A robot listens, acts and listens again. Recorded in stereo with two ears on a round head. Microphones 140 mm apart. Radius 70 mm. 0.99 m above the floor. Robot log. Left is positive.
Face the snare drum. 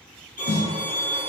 note: The snare drum: about 60° left or 120° left.
cmd yaw +60
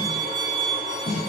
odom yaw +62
note: So it is at 35° left.
cmd yaw +35
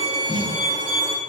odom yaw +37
end: Facing the snare drum.